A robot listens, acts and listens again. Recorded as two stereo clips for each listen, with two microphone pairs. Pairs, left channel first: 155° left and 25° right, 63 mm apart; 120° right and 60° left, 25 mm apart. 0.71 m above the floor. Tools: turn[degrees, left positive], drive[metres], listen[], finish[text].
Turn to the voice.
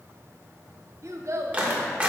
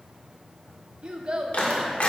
Thought: The child speaking: 10° left.
Action: turn[10]
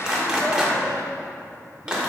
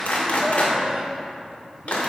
Action: listen[]
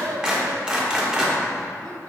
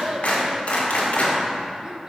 Action: listen[]
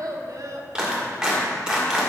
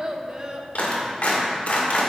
Action: finish[Found it: a child speaking, straight ahead, under 1 m away.]